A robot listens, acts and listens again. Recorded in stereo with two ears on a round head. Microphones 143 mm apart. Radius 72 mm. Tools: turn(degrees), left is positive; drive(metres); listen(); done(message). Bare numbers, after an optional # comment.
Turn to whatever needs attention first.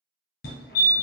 # The fire alarm: about 65° left or 115° left.
turn(65)
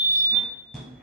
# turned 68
done("Found it: a fire alarm, straight ahead, 1 to 2 m away.")